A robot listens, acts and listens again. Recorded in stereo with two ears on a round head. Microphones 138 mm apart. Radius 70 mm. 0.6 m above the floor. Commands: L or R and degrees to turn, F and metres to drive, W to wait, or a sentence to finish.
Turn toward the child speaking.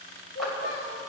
L60
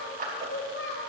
L70
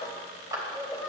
Facing the child speaking, 1 to 2 m away.